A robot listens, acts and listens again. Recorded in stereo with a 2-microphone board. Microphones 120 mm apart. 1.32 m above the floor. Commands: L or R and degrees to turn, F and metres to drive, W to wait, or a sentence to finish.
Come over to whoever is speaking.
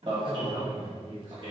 L90
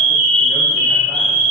W
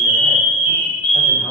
W
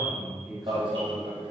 F1.0
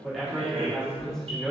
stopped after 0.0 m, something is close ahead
Blocked. The man speaking is further on, straight ahead.